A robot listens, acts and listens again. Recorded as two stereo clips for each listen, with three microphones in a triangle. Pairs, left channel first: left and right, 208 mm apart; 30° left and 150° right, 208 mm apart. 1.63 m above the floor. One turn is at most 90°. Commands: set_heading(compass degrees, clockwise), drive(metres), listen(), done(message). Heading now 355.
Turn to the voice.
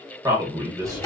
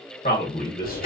set_heading(10)
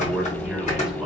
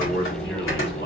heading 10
listen()
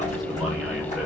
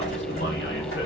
listen()
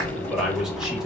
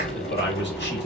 done("Facing the man speaking.")